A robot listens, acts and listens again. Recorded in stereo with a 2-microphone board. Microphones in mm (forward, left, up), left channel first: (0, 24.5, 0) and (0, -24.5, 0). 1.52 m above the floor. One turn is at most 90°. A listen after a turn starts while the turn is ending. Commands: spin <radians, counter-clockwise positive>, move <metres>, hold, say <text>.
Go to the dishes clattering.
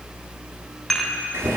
spin 0.52
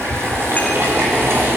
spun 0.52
hold
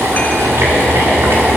hold
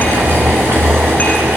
say I heard dishes clattering, but can't make it out now. It was about 25° right or 145° left. I did not reach it.